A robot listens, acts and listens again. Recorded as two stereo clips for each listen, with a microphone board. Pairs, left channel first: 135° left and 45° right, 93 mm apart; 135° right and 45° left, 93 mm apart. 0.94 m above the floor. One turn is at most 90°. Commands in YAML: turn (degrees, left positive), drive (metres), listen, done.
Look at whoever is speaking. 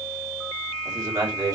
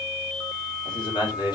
turn: -90
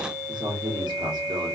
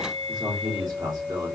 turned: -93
done: "Found it: a man speaking, straight ahead, 1 to 2 m away."